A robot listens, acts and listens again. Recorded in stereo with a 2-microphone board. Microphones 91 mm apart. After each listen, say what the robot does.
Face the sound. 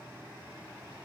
Keep listening.
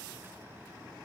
Keep listening.
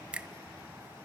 Turn 30° right.
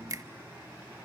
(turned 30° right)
Turn 140° right.
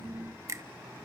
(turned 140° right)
Turn 35° right.
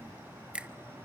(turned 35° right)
Turn 15° right.
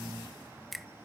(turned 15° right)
Facing the finger snap, under 1 m away.